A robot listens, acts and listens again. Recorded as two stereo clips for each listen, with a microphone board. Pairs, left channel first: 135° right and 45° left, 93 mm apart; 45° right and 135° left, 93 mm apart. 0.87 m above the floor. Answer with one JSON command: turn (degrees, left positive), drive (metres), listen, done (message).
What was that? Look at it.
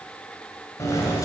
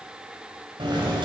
{"turn": 170}
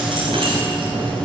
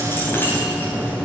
{"turn": 25}
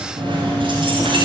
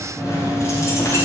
{"turn": 15}
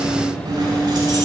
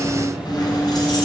{"done": "Found it: keys jangling, straight ahead."}